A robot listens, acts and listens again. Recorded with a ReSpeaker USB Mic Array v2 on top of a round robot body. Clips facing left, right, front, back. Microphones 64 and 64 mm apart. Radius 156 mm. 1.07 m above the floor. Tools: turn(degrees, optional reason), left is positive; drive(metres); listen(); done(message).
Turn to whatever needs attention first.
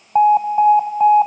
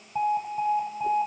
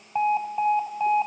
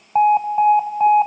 turn(degrees=120, reason="The alarm: 120° left.")
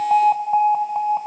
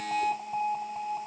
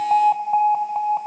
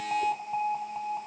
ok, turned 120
turn(degrees=50, reason="The alarm is now 50° left.")
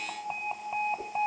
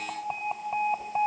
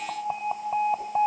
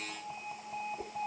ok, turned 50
turn(degrees=-10, reason="The alarm is now 10° right.")
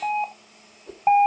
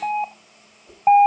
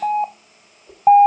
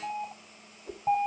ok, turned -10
done("Facing the alarm.")